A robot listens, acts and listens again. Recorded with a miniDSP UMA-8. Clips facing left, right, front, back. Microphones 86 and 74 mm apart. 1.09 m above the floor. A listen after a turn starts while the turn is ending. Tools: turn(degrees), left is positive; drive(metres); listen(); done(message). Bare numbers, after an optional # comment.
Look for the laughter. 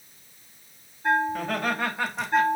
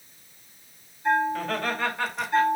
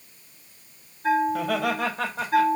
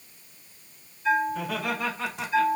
# The laughter: 15° left.
turn(15)
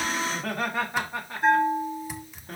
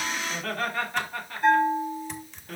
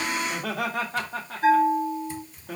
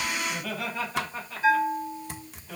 # The laughter is now 30° left.
turn(30)
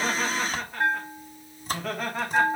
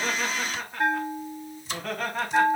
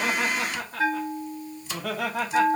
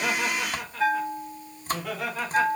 done("Facing the laughter, 2 to 4 m away.")